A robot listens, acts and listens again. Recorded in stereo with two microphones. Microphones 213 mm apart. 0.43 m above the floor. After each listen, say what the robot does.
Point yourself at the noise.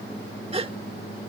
Turn 30° right.
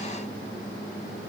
Keep listening.
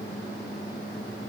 I heard a gasp, but can't make it out now. It was about straight ahead or 120° right.